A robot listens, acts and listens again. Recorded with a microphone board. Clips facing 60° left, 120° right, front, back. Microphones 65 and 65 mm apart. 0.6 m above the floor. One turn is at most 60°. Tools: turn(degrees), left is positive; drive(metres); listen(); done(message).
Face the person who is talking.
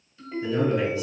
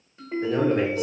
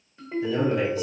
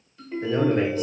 turn(degrees=-60)
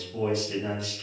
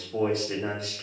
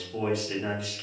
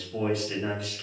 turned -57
turn(degrees=-60)
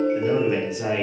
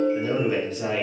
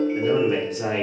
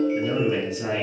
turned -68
turn(degrees=-20)
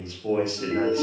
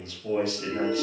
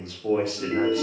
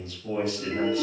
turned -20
done("Facing the man speaking.")